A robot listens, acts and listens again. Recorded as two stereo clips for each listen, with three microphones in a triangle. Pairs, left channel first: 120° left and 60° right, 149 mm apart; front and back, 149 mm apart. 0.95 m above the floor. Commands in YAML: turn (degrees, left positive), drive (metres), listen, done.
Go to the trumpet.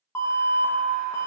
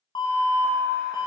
listen: true
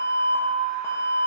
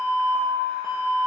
listen: true
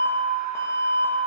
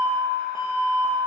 done: "I can't make out a trumpet, only an alarm."